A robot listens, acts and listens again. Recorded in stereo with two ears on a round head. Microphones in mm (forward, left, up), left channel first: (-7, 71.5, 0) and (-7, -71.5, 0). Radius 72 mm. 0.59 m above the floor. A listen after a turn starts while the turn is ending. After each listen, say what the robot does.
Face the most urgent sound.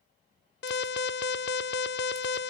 Turn 75° left.
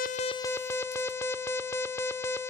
Turn 15° left.
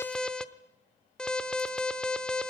Facing the alarm.